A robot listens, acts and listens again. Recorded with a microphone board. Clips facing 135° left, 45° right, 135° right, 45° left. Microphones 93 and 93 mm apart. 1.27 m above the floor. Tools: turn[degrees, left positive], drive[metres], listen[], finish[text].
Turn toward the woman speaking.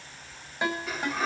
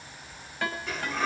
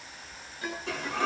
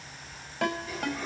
Action: listen[]
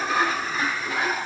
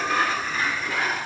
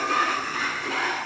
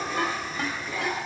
Action: listen[]
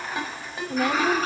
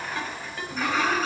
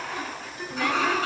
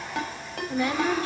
Thought: The woman speaking: 115° left.
Action: turn[115]
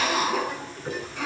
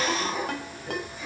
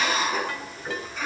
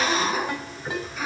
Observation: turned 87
Thought: Nothing new. It was at 25° left.
Action: turn[25]
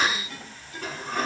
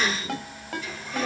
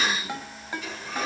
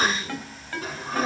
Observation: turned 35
Thought: Nothing new. It was at 10° right.
Action: turn[-10]
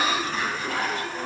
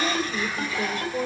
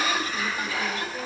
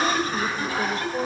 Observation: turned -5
Thought: The woman speaking is now 10° right.
Action: turn[-10]
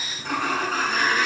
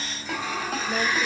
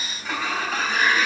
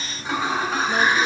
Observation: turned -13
Action: listen[]
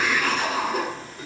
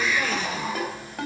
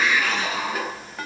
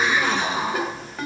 Action: listen[]
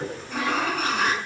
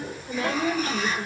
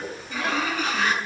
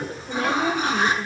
Action: finish[Facing the woman speaking.]